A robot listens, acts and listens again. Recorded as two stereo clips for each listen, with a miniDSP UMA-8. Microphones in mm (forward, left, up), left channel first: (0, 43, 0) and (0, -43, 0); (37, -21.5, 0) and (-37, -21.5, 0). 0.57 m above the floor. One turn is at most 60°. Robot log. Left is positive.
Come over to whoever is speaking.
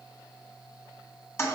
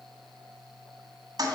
cmd idle
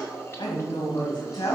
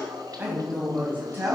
note: The woman speaking: 115° left.
cmd yaw +60
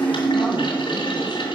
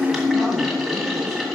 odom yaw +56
note: Nothing new. It was at 60° left.
cmd yaw +60
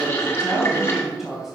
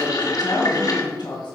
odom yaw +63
cmd fwd 1.0
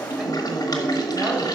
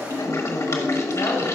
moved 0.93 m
cmd idle
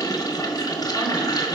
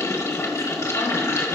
cmd idle
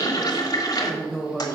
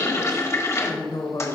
cmd fwd 1.0
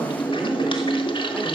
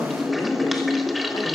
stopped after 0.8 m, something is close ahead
note: The woman speaking is now 10° right.
cmd yaw -10
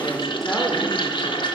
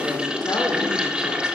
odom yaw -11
cmd idle
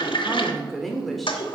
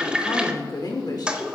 end: Arrived at the woman speaking, straight ahead.